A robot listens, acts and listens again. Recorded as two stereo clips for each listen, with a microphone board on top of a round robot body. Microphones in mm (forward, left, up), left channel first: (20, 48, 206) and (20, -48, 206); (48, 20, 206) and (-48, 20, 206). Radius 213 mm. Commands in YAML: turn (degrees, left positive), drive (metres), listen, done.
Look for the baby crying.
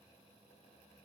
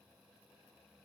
listen: true
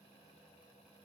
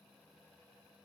listen: true
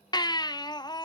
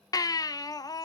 turn: 50
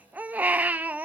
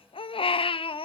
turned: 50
turn: -15
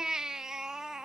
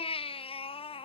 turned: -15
done: "Facing the baby crying."